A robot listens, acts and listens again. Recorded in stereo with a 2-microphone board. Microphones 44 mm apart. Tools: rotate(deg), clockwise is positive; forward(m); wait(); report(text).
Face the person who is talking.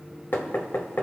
wait()
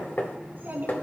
rotate(55)
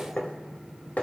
wait()
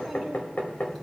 wait()
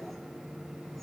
report("I heard a child speaking, but can't make it out now. It was about straight ahead or 70° right.")